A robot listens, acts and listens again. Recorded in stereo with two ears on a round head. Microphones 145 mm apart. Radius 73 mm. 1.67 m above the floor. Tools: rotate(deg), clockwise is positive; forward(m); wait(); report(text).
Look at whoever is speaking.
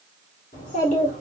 rotate(-50)
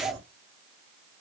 report("Facing the child speaking, 1 to 2 m away.")